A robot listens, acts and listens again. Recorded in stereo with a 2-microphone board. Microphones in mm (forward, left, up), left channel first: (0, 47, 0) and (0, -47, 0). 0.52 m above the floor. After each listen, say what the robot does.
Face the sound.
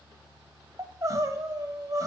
Turn 35° right.
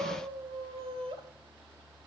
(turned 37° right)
Turn 105° right.
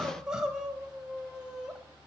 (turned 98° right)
Turn 10° right.
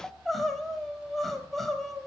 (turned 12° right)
Found it: crying, straight ahead.